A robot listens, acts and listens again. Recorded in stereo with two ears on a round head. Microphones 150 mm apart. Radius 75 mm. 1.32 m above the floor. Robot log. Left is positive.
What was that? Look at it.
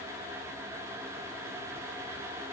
cmd idle
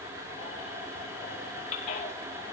note: The baby crying: about 45° left or 135° left.
cmd yaw +45
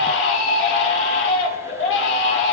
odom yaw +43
note: So it is at 90° left.
cmd yaw +90
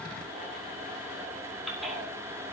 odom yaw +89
end: Facing the baby crying, 2 to 4 m away.